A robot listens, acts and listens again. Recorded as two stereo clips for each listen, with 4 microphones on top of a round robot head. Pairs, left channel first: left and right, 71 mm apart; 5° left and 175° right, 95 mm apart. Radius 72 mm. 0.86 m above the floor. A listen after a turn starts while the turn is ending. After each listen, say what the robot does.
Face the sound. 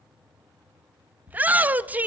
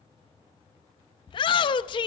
Turn 25° right.
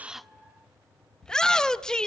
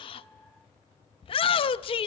Turn 10° left.
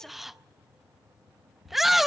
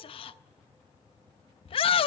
Found it: a shout, straight ahead.